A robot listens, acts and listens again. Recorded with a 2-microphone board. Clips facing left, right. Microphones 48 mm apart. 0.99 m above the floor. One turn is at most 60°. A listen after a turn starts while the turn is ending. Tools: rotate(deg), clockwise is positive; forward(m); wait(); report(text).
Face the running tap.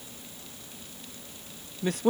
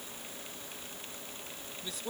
wait()
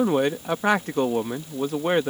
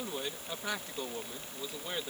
wait()
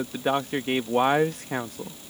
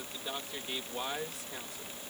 report("I can't make out a running tap, only a man speaking.")